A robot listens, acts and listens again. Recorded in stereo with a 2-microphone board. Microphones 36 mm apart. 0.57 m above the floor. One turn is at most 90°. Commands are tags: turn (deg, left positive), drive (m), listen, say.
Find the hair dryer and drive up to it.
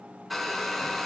<turn deg="30"/>
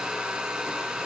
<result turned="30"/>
<turn deg="-25"/>
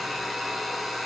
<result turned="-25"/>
<drive m="1.0"/>
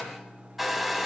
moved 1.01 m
<drive m="1.0"/>
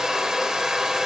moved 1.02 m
<turn deg="-15"/>
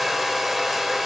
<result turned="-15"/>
<drive m="1.0"/>
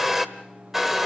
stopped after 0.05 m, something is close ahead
<turn deg="-10"/>
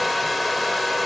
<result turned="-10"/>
<say>Arrived at the hair dryer, straight ahead.</say>